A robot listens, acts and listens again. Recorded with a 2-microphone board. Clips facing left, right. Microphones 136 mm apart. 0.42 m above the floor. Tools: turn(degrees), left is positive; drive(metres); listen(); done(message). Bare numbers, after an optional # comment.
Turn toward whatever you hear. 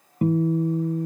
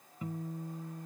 # The guitar: about 70° left or 110° left.
turn(70)
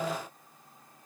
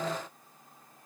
listen()
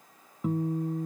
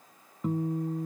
done("Found it: a guitar, straight ahead.")